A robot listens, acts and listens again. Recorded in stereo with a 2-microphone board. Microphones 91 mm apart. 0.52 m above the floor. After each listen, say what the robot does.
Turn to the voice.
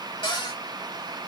Keep listening.
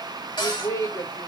Turn 50° left.
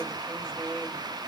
Turn 10° left.
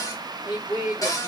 Found it: a woman speaking, straight ahead.